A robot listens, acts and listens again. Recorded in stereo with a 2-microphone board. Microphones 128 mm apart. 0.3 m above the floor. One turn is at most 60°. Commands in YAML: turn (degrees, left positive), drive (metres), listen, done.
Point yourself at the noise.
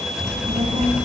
turn: -60
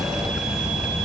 turn: -10
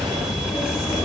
done: "Found it: a child speaking, straight ahead, 2 to 4 m away."